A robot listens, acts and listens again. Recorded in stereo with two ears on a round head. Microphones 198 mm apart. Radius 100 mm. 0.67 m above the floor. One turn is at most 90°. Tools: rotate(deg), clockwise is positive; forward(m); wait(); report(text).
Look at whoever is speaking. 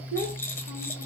rotate(40)
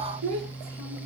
rotate(90)
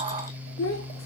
rotate(-60)
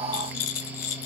wait()
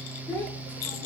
rotate(-15)
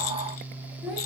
rotate(-10)
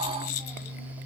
wait()
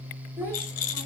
report("Found it: a child speaking, straight ahead.")